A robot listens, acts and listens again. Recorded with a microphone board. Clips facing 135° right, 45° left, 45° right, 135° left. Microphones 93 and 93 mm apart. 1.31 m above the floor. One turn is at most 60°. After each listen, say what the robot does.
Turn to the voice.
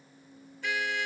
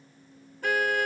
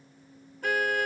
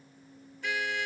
Keep listening.
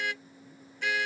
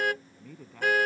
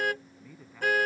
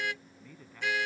Turn 40° left.
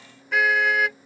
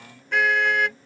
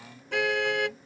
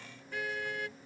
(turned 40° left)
Keep listening.
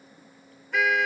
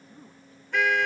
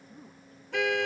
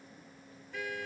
Keep listening.
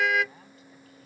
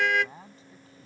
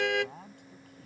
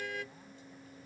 Turn 15° right.
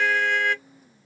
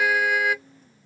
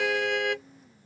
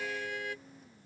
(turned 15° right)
Keep listening.
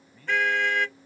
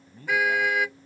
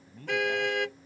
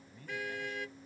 Turn 10° right.
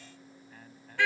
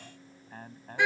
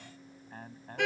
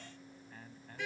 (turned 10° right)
Found it: a man speaking, straight ahead.